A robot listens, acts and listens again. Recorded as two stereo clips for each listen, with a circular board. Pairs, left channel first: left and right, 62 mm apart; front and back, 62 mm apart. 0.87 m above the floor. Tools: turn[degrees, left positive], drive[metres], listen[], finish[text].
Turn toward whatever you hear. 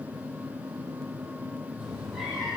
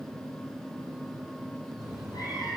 Action: finish[Found it: a cat meowing, straight ahead, over 4 m away.]